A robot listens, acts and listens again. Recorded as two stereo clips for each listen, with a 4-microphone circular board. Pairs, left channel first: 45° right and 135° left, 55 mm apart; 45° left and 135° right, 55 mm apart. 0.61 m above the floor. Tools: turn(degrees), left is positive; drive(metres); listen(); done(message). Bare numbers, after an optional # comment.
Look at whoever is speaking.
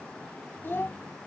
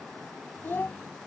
done("Found it: a child speaking, straight ahead.")